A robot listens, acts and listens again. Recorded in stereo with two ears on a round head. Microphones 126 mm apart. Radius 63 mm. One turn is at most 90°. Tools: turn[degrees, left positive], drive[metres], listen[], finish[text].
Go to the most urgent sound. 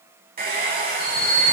Thought: The alarm: about 70° right or 110° right.
Action: turn[-70]
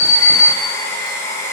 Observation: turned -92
Thought: So it is at 15° right.
Action: turn[-15]
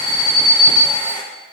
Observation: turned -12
Action: drive[1.0]
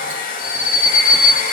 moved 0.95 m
Action: drive[1.0]
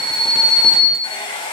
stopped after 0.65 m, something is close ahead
Action: finish[I am next to the alarm.]